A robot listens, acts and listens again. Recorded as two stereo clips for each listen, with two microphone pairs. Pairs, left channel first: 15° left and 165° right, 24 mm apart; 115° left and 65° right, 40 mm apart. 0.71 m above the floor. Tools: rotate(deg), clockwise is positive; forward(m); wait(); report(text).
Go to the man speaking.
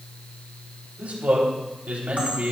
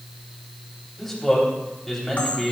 rotate(160)
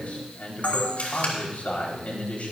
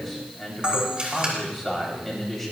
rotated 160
rotate(-30)
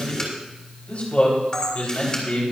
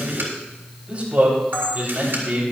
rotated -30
rotate(15)
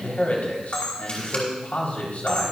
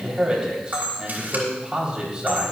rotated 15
forward(1.0)
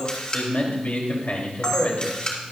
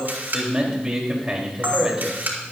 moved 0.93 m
forward(1.0)
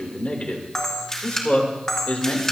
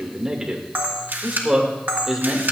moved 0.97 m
forward(1.0)
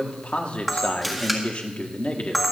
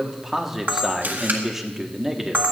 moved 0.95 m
rotate(-15)
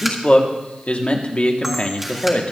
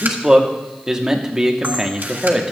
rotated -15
forward(1.0)
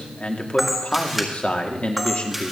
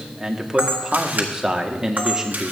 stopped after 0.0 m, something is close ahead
report("Arrived at the man speaking, straight ahead.")